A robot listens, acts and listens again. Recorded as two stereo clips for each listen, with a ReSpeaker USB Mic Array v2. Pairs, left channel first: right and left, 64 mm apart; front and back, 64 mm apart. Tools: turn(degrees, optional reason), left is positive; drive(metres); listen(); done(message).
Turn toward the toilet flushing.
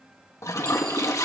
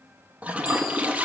turn(degrees=-115, reason="The toilet flushing: 115° right.")
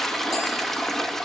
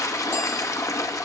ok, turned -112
done("Facing the toilet flushing.")